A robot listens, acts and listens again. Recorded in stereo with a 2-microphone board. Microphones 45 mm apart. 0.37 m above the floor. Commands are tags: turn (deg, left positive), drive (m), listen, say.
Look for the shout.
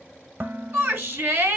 <turn deg="-65"/>
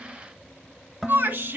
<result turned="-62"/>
<turn deg="-45"/>
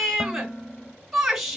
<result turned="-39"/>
<say>Facing the shout.</say>